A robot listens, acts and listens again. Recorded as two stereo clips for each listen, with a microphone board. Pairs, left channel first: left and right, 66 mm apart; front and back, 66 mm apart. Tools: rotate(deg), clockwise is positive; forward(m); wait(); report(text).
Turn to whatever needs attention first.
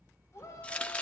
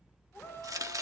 rotate(-50)
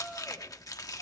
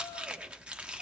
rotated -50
wait()
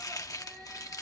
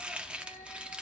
report("Found it: a shout, straight ahead, over 4 m away.")